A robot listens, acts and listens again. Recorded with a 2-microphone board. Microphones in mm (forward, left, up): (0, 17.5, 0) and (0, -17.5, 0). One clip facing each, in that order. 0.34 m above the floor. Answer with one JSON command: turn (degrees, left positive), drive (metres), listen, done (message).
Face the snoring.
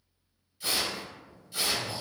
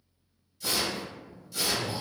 {"turn": -15}
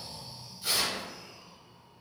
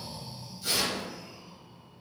{"done": "Facing the snoring, 1 to 2 m away."}